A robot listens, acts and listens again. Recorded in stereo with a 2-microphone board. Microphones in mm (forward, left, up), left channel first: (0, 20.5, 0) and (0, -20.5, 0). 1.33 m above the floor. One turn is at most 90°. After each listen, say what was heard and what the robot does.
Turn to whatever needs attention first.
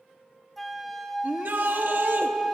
The shout: about 55° right or 125° right. Turn 55° right.
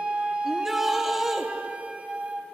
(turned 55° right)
Facing the shout, under 1 m away.